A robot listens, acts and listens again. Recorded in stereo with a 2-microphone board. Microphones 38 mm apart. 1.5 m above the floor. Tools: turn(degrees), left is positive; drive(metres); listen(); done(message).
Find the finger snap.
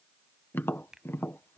turn(degrees=-15)
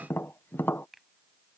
done("Facing the finger snap.")